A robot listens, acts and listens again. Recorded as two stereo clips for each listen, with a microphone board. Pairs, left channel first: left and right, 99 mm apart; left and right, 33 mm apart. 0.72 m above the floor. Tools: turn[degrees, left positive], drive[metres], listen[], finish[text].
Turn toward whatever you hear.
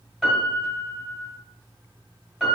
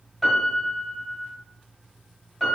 Action: turn[-30]
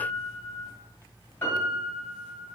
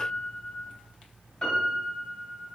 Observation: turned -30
Thought: So it is at 25° left.
Action: turn[25]
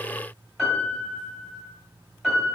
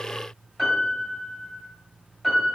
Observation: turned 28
Action: finish[Found it: a piano, straight ahead, 2 to 4 m away.]